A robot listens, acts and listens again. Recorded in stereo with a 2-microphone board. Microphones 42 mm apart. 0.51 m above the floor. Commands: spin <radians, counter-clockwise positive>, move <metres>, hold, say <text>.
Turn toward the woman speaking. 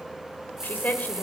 spin 0.70
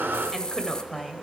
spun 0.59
say Found it: a woman speaking, straight ahead.